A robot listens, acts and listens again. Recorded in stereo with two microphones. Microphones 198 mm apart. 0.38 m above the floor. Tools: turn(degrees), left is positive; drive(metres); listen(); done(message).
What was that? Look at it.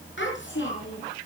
turn(degrees=70)
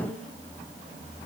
listen()
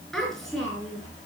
done("Found it: a child speaking, straight ahead, over 4 m away.")